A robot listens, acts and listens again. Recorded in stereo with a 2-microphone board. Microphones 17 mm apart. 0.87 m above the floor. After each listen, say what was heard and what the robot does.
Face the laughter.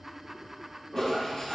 The laughter: about 25° right or 155° right. Turn 25° right.
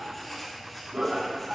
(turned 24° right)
So it is at 125° right. Turn 125° right.
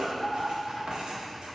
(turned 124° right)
The laughter is now 10° left. Turn 10° left.
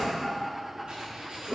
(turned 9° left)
The laughter is now 10° left. Turn 10° left.
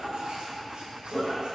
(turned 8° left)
Found it: laughter, straight ahead, over 4 m away.